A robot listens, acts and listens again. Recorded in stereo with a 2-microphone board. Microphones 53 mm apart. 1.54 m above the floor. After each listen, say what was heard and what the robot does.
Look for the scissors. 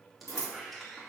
The scissors: about 70° left or 110° left. Turn 70° left.
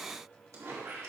Keep listening.
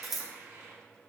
Facing the scissors, 1 to 2 m away.